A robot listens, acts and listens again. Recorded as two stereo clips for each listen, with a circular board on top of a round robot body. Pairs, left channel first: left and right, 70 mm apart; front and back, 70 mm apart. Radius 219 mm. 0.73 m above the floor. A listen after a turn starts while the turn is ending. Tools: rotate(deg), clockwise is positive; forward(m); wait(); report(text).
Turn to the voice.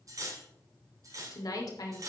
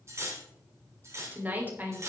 rotate(-115)
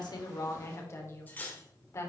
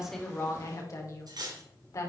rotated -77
rotate(-40)
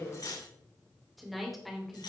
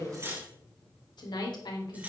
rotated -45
report("Found it: a woman speaking, straight ahead, 2 to 4 m away.")